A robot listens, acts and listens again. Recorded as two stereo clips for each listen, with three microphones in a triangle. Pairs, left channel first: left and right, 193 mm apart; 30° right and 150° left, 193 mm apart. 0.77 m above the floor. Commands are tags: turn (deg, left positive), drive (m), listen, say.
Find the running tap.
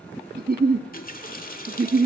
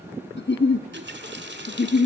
<turn deg="130"/>
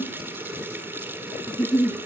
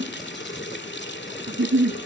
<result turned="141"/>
<turn deg="-10"/>
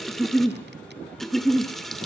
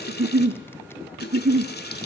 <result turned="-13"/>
<say>Found it: a running tap, straight ahead.</say>